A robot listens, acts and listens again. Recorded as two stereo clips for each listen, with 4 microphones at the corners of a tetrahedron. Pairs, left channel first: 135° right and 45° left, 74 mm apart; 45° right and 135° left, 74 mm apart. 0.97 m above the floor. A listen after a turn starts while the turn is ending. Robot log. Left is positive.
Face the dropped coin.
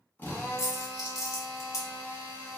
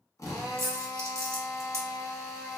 note: The dropped coin: straight behind.
cmd yaw +180
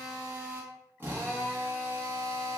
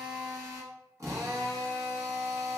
end: I heard a dropped coin from this way, but can't make it out now.